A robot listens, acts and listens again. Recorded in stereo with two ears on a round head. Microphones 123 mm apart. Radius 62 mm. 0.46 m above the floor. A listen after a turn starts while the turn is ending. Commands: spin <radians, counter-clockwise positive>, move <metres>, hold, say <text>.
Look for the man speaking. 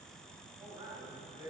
spin -0.52
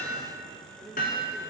say Facing the man speaking.